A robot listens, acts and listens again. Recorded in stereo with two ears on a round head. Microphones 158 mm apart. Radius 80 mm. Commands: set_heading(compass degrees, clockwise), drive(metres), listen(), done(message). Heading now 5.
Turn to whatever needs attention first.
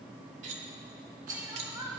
set_heading(25)
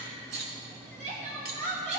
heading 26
set_heading(166)
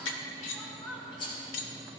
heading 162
done("Found it: crying, straight ahead.")